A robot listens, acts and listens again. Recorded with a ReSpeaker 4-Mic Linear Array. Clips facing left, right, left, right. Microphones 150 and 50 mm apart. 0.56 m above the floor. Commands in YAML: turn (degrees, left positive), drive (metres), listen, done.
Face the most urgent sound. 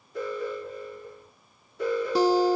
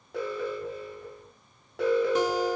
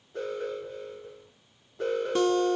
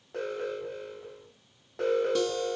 turn: -90
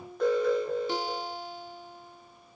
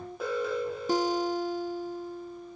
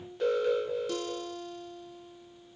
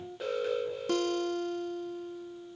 done: "Facing the alarm."